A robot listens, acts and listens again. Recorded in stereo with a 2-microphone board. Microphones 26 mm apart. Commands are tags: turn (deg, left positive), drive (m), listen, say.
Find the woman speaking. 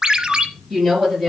<turn deg="30"/>
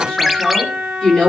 <turn deg="145"/>
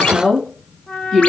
<turn deg="15"/>
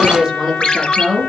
<say>Found it: a woman speaking, straight ahead.</say>